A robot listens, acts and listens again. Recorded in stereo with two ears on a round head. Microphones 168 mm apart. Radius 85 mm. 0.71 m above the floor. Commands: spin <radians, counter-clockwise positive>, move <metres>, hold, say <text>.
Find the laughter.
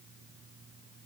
hold
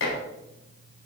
hold
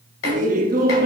spin -0.87
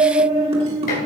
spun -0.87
spin -0.61
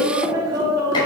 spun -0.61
spin -0.44
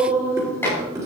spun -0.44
spin -0.35
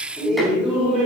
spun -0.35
say Facing the laughter, 2 to 4 m away.